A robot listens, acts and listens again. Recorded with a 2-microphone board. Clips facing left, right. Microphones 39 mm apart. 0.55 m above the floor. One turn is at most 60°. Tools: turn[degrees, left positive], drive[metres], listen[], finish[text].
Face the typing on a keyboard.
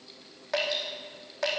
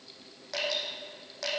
Action: listen[]
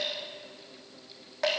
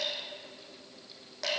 Action: listen[]
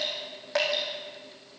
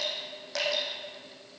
Action: finish[I can't make out typing on a keyboard, only dripping.]